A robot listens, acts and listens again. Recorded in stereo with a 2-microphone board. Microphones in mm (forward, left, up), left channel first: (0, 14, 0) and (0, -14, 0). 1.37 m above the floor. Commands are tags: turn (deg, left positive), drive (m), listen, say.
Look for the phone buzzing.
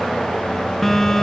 <turn deg="30"/>
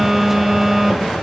<turn deg="-15"/>
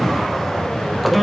<say>Facing the phone buzzing, under 1 m away.</say>